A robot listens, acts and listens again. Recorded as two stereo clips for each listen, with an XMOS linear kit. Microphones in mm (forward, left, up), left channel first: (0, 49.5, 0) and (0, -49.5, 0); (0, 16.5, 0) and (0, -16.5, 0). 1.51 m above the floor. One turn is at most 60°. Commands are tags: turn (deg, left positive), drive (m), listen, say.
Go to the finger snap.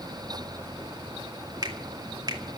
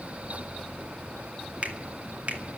<turn deg="-45"/>
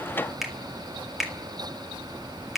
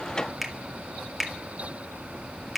<drive m="1.0"/>
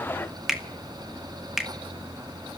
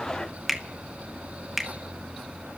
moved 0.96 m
<drive m="1.0"/>
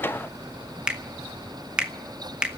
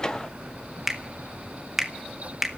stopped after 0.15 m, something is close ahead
<turn deg="-10"/>
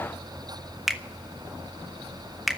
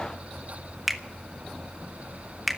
<say>Arrived at the finger snap, straight ahead.</say>